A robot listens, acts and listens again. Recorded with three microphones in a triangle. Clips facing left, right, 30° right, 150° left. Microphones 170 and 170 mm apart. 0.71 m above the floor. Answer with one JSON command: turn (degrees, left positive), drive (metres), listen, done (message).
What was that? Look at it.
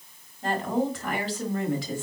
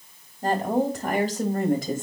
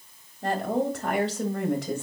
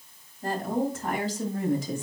{"turn": -50}
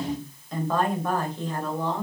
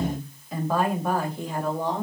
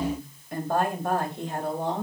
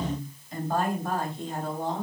{"turn": -15}
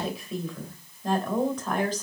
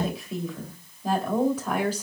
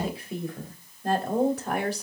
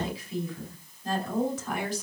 {"turn": -10}
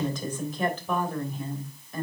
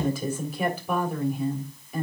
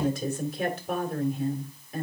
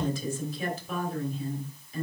{"turn": -10}
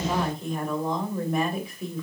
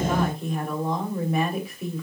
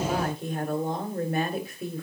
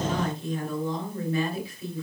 {"done": "Facing the woman speaking, 2 to 4 m away."}